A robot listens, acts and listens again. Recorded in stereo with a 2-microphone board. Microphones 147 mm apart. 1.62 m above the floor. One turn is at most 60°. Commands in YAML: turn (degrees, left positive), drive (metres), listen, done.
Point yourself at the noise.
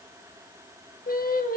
turn: 60
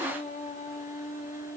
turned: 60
turn: 60
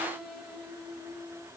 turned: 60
done: "Facing the singing, 2 to 4 m away."